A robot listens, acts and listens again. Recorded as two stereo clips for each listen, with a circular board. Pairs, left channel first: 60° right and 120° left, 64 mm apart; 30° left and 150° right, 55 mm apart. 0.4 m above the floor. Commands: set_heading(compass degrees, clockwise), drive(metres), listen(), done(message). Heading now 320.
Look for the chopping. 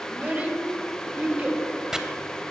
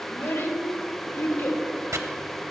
set_heading(120)
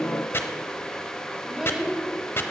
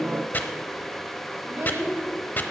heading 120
set_heading(140)
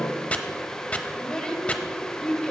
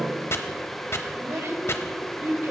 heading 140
done("Facing the chopping.")